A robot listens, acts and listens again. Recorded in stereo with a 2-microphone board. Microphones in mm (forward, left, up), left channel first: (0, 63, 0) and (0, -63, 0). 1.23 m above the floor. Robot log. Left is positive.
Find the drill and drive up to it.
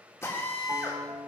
note: The drill: about 25° left or 155° left.
cmd yaw +25
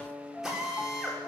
cmd fwd 1.0
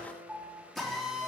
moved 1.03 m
cmd fwd 1.0
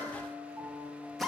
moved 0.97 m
cmd fwd 1.0
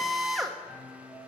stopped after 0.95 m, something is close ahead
end: I am next to the drill.